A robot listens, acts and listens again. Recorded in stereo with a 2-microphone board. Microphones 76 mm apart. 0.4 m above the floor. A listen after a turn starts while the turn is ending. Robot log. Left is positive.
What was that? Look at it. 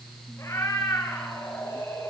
note: The cat meowing: about 40° left or 140° left.
cmd yaw +40
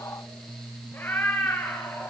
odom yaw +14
note: So it is at 30° left.
cmd yaw +30
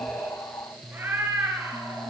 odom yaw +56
note: The cat meowing is now 30° right.
cmd yaw -30
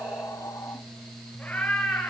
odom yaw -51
note: The cat meowing is now 20° left.
cmd yaw +20
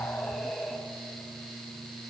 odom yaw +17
end: Facing the cat meowing.